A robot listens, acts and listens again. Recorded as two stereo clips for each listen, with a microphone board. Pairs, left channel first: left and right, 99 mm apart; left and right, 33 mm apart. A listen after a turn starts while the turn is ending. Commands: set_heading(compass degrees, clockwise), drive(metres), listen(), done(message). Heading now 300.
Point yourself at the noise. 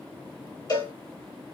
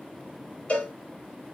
set_heading(260)
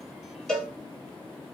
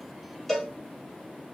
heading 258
done("Facing the cowbell, 1 to 2 m away.")